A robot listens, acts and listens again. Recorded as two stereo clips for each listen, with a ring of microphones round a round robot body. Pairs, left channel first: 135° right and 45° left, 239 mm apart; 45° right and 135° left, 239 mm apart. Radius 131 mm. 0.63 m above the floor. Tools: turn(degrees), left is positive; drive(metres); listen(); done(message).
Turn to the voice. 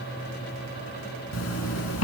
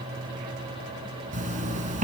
listen()
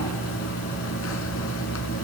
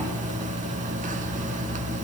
listen()
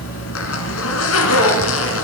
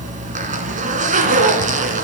done("I can't make out anyone speaking, only a zipper.")